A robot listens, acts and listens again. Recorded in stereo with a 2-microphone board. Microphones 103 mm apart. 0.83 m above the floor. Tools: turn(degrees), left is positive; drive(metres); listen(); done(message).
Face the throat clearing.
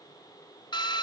listen()
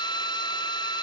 listen()
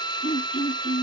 turn(degrees=70)
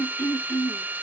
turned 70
turn(degrees=25)
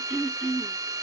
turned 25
done("Facing the throat clearing.")